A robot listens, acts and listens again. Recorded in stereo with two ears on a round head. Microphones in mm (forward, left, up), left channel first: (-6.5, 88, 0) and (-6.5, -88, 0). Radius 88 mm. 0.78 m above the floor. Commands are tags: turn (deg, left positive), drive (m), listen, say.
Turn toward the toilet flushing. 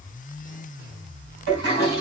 <turn deg="-55"/>
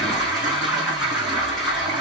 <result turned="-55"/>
<say>Facing the toilet flushing, 2 to 4 m away.</say>